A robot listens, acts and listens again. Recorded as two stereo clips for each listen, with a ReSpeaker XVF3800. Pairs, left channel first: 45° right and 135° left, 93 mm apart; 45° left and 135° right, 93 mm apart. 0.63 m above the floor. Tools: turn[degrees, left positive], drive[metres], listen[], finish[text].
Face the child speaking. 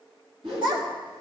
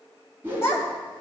Thought: The child speaking: 105° left.
Action: turn[105]
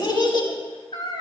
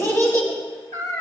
Thought: The child speaking is now 15° right.
Action: turn[-15]
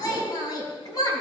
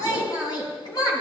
Action: finish[Found it: a child speaking, straight ahead.]